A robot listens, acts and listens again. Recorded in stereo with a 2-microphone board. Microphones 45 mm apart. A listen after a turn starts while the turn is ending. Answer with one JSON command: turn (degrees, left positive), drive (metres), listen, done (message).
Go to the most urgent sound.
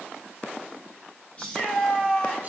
{"turn": 25}
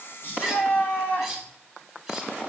{"turn": 125}
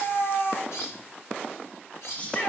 {"turn": 30}
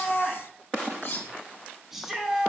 {"drive": 1.0}
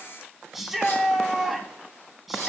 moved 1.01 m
{"drive": 1.0}
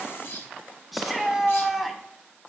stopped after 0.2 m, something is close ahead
{"done": "Arrived at the shout, straight ahead."}